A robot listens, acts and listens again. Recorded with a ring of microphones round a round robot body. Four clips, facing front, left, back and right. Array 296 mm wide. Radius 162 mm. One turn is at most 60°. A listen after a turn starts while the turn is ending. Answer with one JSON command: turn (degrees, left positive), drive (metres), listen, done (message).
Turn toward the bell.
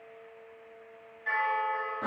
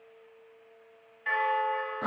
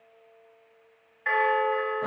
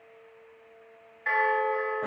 {"turn": -60}
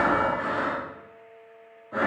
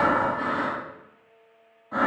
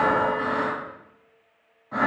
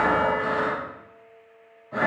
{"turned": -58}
{"turn": -60}
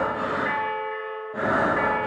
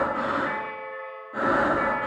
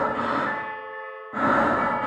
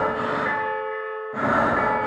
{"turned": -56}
{"turn": -55}
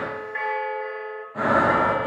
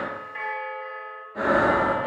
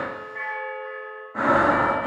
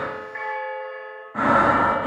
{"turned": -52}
{"done": "Facing the bell, under 1 m away."}